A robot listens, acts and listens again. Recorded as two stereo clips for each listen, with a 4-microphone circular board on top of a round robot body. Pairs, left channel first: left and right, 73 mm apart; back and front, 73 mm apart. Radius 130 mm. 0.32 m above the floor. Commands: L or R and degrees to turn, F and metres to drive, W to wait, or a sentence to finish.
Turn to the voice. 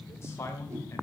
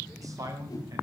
L40
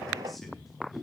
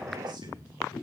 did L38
W
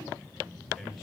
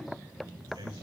Facing the man speaking, over 4 m away.